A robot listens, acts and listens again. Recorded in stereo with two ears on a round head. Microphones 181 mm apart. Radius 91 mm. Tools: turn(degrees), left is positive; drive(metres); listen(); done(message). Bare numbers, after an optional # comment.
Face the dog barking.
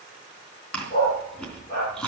# The dog barking: about 50° left or 130° left.
turn(50)
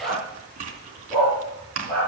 # So it is at 10° left.
turn(10)
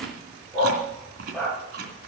done("Found it: a dog barking, straight ahead, over 4 m away.")